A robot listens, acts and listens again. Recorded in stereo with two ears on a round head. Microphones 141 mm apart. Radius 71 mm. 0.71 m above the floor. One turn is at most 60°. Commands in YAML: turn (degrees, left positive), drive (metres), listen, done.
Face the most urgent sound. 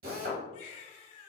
turn: 45
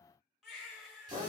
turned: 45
done: "Found it: a baby crying, straight ahead, 1 to 2 m away."